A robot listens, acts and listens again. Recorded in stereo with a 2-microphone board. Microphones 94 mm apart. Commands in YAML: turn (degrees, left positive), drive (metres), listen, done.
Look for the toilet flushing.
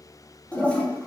turn: 30
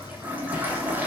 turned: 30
turn: -15
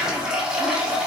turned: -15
done: "Found it: a toilet flushing, straight ahead, under 1 m away."